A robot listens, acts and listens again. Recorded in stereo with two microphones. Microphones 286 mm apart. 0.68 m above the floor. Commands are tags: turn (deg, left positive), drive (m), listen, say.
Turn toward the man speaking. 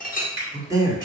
<turn deg="-30"/>
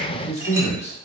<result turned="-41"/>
<turn deg="25"/>
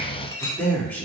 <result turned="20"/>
<say>Facing the man speaking, 1 to 2 m away.</say>